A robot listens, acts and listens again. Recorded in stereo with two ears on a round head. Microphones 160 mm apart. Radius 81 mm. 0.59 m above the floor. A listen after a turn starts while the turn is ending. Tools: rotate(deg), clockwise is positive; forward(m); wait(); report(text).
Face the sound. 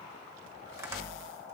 rotate(15)
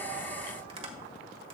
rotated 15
rotate(145)
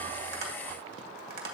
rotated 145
rotate(55)
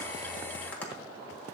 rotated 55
wait()
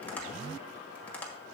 rotate(-10)
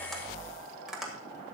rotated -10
report("Facing the tapping, 1 to 2 m away.")